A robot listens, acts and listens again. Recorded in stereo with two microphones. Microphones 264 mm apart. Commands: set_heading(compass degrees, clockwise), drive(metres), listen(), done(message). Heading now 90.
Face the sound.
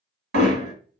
set_heading(145)
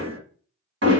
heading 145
set_heading(210)
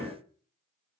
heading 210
listen()
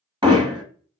set_heading(230)
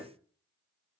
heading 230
done("Facing the hammering, 1 to 2 m away.")